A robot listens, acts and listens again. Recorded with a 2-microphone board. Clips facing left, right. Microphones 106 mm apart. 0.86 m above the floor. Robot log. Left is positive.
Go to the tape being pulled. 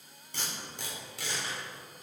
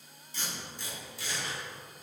note: The tape being pulled: about 70° left or 110° left.
cmd yaw +70
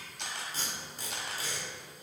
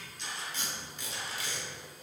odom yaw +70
note: So it is at 35° left.
cmd yaw +35
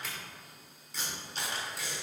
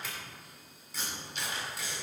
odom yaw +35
cmd fwd 1.0
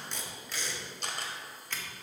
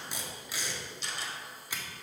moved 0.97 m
note: The tape being pulled is now 10° right.
cmd yaw -10
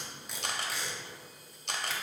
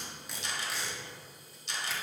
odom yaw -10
cmd fwd 1.0
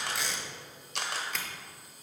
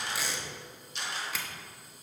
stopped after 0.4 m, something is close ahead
end: I am next to the tape being pulled.